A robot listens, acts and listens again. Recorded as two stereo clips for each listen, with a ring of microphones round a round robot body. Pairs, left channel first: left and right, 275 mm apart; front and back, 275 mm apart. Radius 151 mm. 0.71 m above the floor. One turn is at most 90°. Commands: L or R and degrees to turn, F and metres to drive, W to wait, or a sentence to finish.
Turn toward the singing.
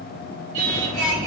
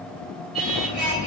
R90
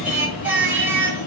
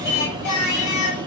R10
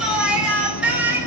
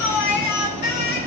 Facing the singing, over 4 m away.